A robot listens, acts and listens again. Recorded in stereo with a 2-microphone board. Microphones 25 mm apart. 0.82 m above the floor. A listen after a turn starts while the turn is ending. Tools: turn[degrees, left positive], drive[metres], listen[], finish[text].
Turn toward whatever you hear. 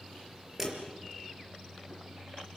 Action: turn[-30]
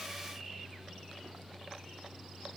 Action: listen[]
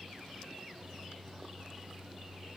Action: finish[I heard a dropped coin, but can't make it out now. It was about 15° left or 135° right.]